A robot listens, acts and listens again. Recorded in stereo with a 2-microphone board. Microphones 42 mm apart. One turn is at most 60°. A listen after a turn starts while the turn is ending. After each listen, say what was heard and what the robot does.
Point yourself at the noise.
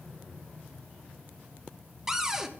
Turn 30° right.
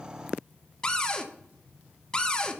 So it is at 20° left. Turn 20° left.
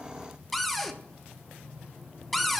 Facing the cupboard door.